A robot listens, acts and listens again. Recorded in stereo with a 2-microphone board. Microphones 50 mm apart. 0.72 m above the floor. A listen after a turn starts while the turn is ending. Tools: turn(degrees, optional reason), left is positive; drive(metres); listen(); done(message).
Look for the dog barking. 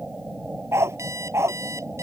turn(degrees=-60, reason="The dog barking: about 60° right or 120° right.")
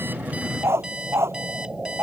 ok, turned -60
turn(degrees=-55, reason="So it is at 55° right.")
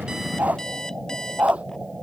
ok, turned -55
turn(degrees=-25, reason="The dog barking is now 25° right.")
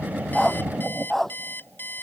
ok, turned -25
done("Facing the dog barking.")